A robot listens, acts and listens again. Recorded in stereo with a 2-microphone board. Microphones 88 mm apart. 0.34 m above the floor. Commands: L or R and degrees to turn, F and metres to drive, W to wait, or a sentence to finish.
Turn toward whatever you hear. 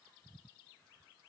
W
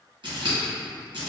R70
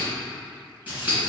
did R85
R20
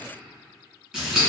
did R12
R10
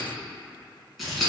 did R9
Found it: scissors, straight ahead.